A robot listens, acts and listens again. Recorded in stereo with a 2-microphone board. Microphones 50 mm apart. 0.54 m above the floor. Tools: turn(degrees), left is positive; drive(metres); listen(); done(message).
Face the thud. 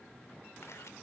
listen()
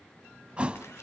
turn(degrees=-20)
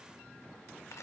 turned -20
listen()
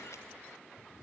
done("I heard a thud, but can't make it out now. It was about straight ahead or 140° right.")